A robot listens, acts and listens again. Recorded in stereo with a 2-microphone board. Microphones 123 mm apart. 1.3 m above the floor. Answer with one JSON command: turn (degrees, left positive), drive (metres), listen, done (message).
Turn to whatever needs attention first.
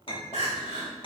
{"turn": -70}
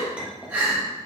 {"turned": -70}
{"turn": -15}
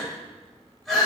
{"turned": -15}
{"done": "Facing the crying, 1 to 2 m away."}